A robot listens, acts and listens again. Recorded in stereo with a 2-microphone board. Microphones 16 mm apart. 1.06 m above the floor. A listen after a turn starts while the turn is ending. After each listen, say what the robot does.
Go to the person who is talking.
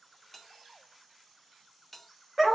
Keep listening.
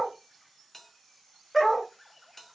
Keep listening.
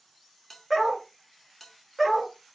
I can't make out anyone speaking, only a bell and a dog barking.